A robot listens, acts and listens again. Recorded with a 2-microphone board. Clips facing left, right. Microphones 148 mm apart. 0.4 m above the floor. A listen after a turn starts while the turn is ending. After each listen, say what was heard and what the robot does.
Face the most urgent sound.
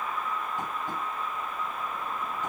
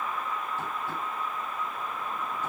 Keep listening.
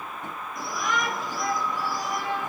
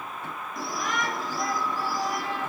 The shout: about 35° right or 145° right. Turn 35° right.
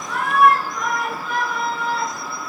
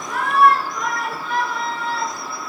Found it: a shout, straight ahead.